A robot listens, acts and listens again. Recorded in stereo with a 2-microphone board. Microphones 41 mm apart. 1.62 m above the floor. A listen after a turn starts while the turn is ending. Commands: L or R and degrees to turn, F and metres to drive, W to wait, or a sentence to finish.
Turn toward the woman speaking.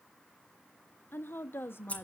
L90
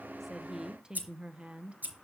R35
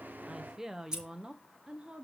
R25
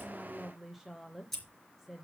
Facing the woman speaking.